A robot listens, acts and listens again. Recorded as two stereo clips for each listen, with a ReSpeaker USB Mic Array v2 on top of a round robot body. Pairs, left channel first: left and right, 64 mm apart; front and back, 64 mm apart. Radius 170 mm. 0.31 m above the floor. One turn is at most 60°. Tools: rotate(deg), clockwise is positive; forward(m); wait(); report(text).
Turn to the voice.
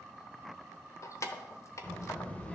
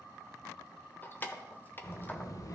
rotate(-20)
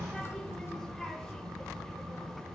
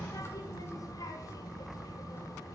report("Found it: a child speaking, straight ahead, 1 to 2 m away.")